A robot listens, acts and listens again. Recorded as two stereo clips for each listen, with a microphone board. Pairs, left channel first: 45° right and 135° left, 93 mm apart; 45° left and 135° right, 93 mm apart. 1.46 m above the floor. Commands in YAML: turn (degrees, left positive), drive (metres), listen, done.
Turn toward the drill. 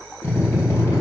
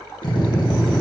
turn: 15
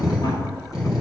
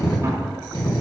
done: "Facing the drill."